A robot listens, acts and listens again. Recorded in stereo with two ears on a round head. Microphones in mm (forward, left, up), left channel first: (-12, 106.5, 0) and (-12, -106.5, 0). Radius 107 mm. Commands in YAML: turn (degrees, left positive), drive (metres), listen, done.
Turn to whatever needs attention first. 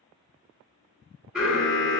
turn: -30
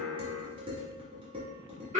turn: -145
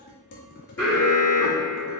turn: 10
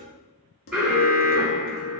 done: "Facing the alarm."